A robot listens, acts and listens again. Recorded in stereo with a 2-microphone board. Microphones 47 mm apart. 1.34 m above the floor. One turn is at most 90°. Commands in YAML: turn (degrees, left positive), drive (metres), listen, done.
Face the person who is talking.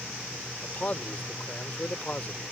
turn: 35
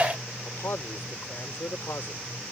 turn: 90
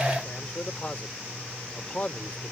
turn: 30
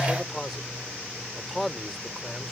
done: "Found it: a man speaking, straight ahead."